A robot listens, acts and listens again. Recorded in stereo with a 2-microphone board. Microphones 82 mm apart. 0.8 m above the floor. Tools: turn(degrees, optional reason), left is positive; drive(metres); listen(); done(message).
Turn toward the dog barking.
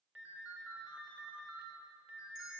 listen()
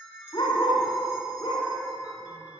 turn(degrees=65, reason="The dog barking: about 65° left or 115° left.")
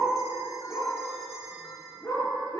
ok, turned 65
turn(degrees=60, reason="So it is at 60° left.")
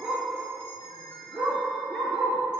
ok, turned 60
done("Facing the dog barking.")